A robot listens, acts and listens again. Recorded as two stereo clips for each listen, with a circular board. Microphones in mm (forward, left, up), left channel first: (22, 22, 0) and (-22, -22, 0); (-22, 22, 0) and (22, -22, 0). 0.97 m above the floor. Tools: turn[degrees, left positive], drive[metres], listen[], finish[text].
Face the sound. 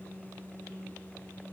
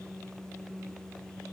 Action: listen[]
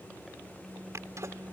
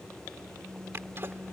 Thought: The sneeze: 95° right.
Action: turn[-95]
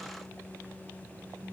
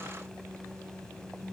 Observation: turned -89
Action: finish[Facing where the sneeze came from. I can't hear it now.]